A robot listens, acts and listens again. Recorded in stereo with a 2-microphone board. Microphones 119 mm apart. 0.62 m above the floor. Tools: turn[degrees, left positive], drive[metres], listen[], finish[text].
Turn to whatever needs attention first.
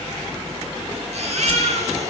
Thought: The baby crying: about 65° right or 115° right.
Action: turn[-65]
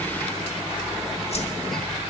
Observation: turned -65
Action: listen[]
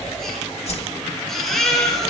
Action: finish[Facing the baby crying.]